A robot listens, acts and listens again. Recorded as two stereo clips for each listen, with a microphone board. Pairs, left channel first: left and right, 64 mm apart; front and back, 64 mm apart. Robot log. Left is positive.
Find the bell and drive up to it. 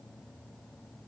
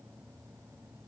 cmd idle
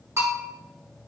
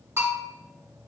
note: The bell: 135° right.
cmd yaw -135
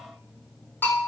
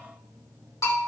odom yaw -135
note: The bell is now 35° left.
cmd yaw +35
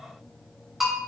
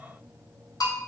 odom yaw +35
cmd fwd 1.0
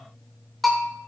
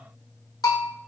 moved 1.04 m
cmd fwd 1.0
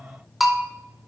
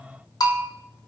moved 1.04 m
cmd fwd 1.0
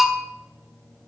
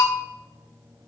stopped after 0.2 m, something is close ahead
end: I am next to the bell.